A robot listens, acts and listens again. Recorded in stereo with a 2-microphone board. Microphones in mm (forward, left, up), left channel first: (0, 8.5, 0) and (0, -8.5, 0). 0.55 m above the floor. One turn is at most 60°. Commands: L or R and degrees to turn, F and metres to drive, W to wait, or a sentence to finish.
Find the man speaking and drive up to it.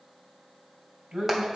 R60
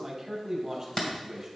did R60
R20
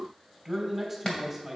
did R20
F1.0
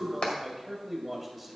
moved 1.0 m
F1.0
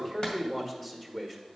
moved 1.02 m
L10
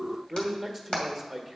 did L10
F1.0
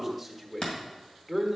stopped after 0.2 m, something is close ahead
I am next to the man speaking.